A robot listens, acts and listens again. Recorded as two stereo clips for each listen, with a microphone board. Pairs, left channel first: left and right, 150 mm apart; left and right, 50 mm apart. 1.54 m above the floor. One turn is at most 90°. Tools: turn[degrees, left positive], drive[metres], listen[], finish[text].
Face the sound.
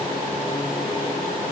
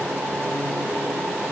Action: listen[]
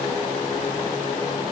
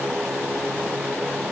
Action: listen[]
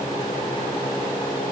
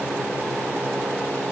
Action: finish[I can't make out anything.]